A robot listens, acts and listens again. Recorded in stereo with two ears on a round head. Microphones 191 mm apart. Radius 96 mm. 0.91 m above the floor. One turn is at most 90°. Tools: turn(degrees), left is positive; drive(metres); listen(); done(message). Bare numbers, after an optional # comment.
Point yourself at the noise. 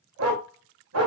# The dog barking: about 70° right or 110° right.
turn(-70)
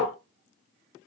done("Facing the dog barking, 1 to 2 m away.")